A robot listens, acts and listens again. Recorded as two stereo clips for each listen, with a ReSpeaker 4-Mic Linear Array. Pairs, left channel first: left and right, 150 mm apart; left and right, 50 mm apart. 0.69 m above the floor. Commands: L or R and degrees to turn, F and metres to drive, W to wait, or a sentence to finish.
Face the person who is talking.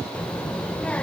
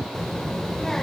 L30
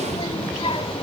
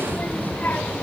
L140
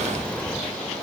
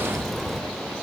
Facing the child speaking.